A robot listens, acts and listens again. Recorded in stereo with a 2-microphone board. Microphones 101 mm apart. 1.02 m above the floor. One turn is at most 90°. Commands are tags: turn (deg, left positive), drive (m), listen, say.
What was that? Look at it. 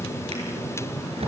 <turn deg="-90"/>
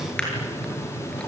<listen/>
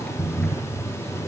<turn deg="10"/>
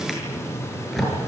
<say>Facing the drawer.</say>